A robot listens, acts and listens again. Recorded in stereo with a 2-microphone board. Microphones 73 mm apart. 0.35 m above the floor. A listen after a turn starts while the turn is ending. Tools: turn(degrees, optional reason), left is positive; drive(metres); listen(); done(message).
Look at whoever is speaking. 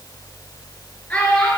turn(degrees=15, reason="The child speaking: about 15° left or 165° left.")
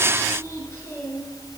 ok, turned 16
turn(degrees=145, reason="So it is at 145° left.")
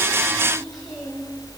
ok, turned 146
listen()
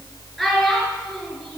done("Facing the child speaking, over 4 m away.")